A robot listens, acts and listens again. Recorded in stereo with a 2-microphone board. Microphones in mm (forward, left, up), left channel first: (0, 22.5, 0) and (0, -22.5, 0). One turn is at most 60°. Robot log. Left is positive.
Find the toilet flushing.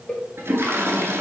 cmd yaw -60
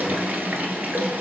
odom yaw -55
note: So it is at 45° right.
cmd yaw -45
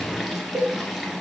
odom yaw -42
end: Found it: a toilet flushing, straight ahead.